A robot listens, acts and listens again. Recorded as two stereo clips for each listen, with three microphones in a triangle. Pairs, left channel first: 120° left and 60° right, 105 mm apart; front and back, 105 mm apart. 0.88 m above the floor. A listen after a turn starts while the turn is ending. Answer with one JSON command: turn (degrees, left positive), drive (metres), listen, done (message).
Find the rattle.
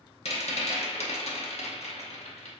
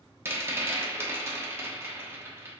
{"turn": 115}
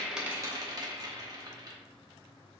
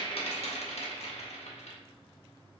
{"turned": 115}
{"done": "Found it: a rattle, straight ahead, under 1 m away."}